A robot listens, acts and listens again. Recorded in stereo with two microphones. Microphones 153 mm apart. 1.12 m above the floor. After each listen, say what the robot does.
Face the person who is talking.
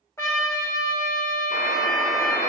Keep listening.
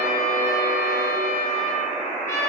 Keep listening.
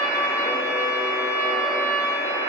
I can't make out anyone speaking to turn to.